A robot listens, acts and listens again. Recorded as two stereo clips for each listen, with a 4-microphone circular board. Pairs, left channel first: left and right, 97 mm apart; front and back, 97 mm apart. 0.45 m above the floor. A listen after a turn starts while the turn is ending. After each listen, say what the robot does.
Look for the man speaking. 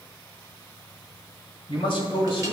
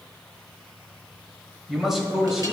Turn 95° left.
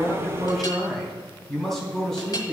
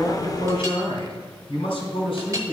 Facing the man speaking, 2 to 4 m away.